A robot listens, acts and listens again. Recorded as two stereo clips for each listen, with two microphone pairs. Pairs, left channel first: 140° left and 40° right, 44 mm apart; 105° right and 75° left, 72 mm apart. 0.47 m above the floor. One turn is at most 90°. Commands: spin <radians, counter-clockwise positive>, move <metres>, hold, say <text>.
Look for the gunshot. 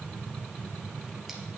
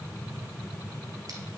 hold
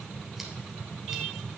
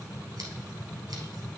hold
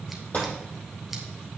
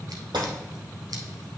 spin 1.40
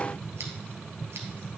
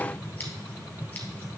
say I heard a gunshot from this way, but can't make it out now.